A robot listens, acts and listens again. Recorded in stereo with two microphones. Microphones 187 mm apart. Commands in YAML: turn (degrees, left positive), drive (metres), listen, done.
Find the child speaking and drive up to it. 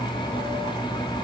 listen: true
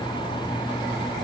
listen: true
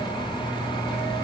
done: "I can't make out a child speaking."